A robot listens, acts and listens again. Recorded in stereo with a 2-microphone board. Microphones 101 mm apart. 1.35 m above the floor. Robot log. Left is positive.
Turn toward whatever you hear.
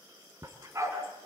note: The dog barking: about 30° right or 150° right.
cmd yaw -30
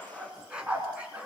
note: So it is at 15° right.
cmd yaw -15
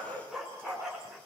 end: Found it: a dog barking, straight ahead, over 4 m away.